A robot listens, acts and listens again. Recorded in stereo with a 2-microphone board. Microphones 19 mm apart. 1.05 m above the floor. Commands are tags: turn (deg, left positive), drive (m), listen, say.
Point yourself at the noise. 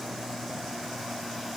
<listen/>
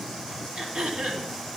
<turn deg="-90"/>
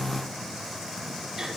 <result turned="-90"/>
<listen/>
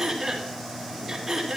<say>Found it: throat clearing, straight ahead, 2 to 4 m away.</say>